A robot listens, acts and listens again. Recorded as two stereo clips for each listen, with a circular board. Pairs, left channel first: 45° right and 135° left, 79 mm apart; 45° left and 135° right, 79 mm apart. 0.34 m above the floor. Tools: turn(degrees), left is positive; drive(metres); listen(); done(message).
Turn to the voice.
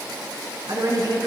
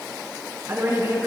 turn(degrees=170)
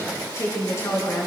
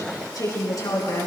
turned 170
done("Facing the woman speaking.")